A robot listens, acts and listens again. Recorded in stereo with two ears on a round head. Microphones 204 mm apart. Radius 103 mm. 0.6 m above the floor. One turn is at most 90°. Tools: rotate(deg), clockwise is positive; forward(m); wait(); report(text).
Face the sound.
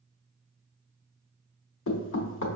rotate(-60)
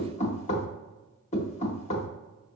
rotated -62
rotate(-35)
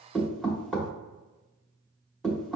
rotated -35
report("Found it: knocking, straight ahead, under 1 m away.")